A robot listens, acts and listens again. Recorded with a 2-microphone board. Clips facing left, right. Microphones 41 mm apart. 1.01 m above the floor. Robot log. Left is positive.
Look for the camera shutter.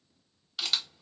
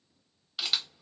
cmd yaw -30
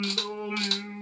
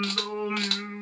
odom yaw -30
cmd idle
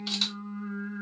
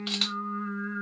cmd idle
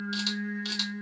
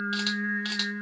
end: I heard a camera shutter, but can't make it out now. It was about 25° left or 145° right.